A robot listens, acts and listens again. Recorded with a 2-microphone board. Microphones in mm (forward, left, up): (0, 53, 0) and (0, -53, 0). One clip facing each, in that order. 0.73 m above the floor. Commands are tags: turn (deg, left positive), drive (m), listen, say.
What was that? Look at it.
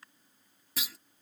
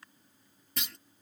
<turn deg="30"/>
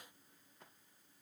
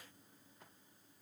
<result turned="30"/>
<listen/>
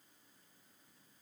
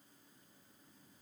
<say>I heard a clunk, but can't make it out now. It was about 25° right or 145° left.</say>